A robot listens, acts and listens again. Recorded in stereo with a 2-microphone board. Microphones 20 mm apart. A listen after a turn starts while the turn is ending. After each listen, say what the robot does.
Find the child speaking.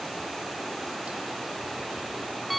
Keep listening.
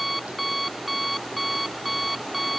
Keep listening.
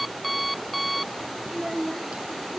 Turn 30° right.
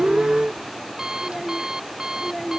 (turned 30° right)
Facing the child speaking.